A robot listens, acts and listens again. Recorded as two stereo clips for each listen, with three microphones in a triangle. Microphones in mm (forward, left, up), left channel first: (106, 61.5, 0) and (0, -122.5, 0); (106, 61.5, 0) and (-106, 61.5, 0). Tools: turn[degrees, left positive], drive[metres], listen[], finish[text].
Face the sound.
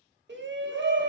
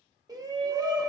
Thought: The shout: 110° right.
Action: turn[-110]
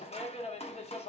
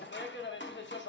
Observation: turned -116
Action: finish[Found it: a shout, straight ahead.]